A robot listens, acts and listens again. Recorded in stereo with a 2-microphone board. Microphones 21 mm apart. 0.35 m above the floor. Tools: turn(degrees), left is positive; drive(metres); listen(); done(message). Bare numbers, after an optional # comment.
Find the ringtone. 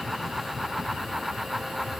listen()
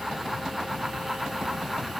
listen()
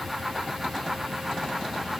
done("I can't make out a ringtone.")